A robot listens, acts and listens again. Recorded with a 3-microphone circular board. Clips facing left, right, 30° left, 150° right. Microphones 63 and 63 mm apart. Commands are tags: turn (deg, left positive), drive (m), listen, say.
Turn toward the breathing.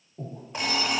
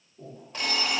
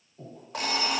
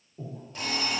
<turn deg="135"/>
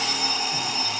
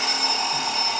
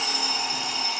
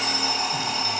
<listen/>
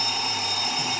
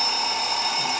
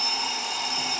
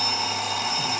<listen/>
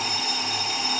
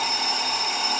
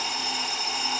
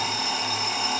<say>I heard breathing from this way, but can't make it out now.</say>